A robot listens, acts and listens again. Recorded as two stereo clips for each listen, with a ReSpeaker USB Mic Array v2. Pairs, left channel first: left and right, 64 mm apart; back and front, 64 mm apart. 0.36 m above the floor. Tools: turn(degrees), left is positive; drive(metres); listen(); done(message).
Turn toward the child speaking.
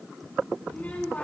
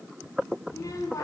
turn(degrees=155)
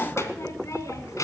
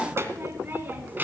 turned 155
turn(degrees=60)
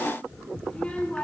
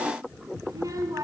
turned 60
turn(degrees=25)
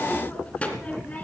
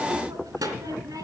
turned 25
turn(degrees=25)
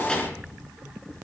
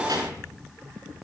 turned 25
turn(degrees=15)
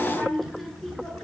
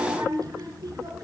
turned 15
done("Facing the child speaking, 2 to 4 m away.")